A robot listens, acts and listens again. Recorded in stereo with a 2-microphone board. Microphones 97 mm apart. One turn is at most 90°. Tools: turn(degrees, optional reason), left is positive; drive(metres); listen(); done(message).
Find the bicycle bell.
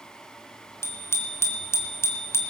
turn(degrees=25, reason="The bicycle bell: about 25° left or 155° left.")
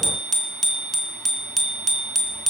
done("Found it: a bicycle bell, straight ahead, 2 to 4 m away.")